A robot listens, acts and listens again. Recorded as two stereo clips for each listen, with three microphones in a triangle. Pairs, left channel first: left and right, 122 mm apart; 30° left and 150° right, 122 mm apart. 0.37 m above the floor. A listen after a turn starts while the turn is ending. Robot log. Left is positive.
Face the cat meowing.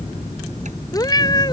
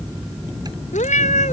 note: The cat meowing: 35° left.
cmd yaw +35
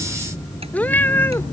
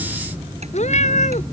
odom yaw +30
note: The cat meowing is now 20° left.
cmd yaw +20
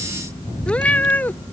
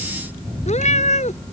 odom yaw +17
note: The cat meowing is now 15° left.
cmd yaw +15
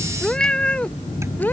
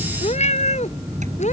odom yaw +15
note: The cat meowing is now 15° left.
cmd yaw +15
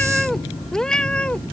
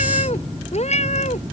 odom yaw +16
note: The cat meowing is now 10° left.
cmd yaw +10
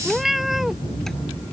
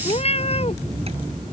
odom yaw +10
end: Facing the cat meowing.